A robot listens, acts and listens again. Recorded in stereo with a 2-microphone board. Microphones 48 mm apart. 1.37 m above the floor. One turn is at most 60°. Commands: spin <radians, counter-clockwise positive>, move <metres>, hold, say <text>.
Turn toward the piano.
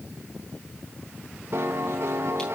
spin -0.96
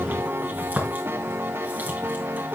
spin -1.05
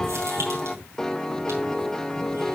spin 0.26
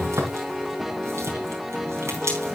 say Facing the piano, under 1 m away.